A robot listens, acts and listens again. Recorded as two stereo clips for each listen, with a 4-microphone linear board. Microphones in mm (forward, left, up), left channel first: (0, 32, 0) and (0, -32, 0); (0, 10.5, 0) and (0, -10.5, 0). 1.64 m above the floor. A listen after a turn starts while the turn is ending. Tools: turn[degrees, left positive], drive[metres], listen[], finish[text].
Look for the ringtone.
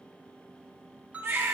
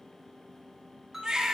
Thought: The ringtone: about 20° right or 160° right.
Action: turn[-20]
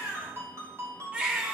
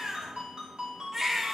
Thought: So it is at 135° right.
Action: turn[-135]
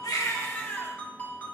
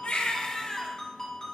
Thought: The ringtone is now 25° left.
Action: turn[25]
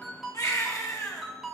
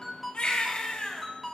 Action: finish[Facing the ringtone.]